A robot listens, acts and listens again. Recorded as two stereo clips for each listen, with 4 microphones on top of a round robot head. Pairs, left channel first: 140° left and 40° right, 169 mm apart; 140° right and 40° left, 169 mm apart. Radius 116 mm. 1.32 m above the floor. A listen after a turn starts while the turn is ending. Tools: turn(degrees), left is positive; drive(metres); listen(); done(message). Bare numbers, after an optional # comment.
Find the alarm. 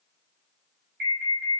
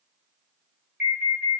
# The alarm: 40° right.
turn(-40)
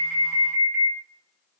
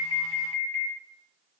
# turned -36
done("Facing the alarm.")